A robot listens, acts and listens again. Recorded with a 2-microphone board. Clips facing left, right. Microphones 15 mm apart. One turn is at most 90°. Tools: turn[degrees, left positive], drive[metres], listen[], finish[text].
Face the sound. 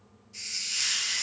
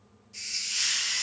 Action: turn[-30]
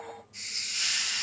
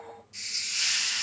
Thought: So it is at 150° right.
Action: turn[-90]
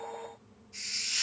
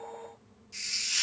Thought: The hiss is now 95° right.
Action: turn[-90]
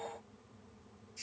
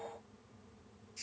Thought: The hiss is now 10° right.
Action: turn[-10]
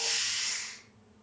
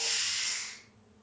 Action: finish[Facing the hiss, 1 to 2 m away.]